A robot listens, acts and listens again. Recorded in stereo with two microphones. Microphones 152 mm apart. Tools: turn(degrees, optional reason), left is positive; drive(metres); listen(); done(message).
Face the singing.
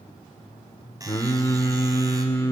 turn(degrees=20, reason="The singing: about 20° left or 160° left.")
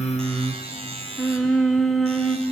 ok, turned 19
done("Found it: singing, straight ahead, under 1 m away.")